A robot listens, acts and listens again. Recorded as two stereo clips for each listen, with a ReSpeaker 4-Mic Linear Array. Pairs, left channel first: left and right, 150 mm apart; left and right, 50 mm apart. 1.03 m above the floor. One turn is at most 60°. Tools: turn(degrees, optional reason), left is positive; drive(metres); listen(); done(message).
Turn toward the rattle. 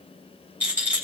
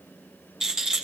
turn(degrees=-30)
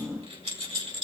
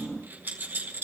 turn(degrees=-60, reason="So it is at 140° right.")
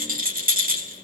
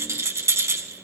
turn(degrees=-60, reason="The rattle is now 85° right.")
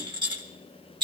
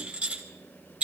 turn(degrees=-30, reason="The rattle is now 30° right.")
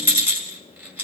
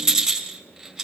turn(degrees=-15, reason="The rattle is now 15° right.")
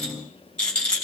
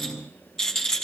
turn(degrees=10, reason="The rattle is now 10° left.")
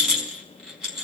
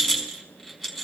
done("Found it: a rattle, straight ahead.")